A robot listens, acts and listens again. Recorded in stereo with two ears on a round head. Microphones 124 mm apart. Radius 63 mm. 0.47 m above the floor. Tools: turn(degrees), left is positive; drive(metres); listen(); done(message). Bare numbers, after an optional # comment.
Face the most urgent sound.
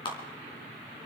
listen()
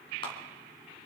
listen()
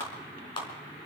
done("I can't make out anything urgent to turn to.")